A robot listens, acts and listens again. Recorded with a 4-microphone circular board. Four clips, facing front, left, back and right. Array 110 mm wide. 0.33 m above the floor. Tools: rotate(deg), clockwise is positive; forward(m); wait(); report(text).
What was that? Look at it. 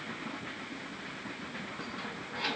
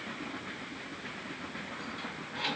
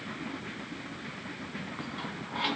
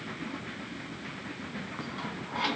rotate(125)
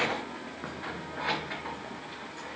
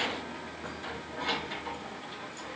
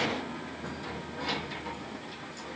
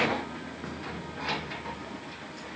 rotate(10)
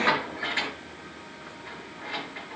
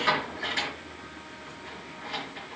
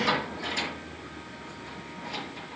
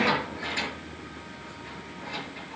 report("Facing the keys jangling, over 4 m away.")